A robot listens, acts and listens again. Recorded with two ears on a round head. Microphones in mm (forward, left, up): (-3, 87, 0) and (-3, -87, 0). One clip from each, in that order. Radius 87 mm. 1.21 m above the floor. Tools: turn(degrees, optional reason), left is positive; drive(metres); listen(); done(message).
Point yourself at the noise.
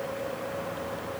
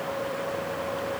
listen()
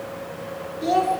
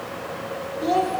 turn(degrees=30)
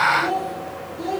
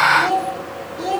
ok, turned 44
turn(degrees=-35, reason="So it is at 35° right.")
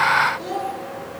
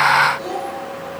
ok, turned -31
done("Found it: a child speaking, straight ahead.")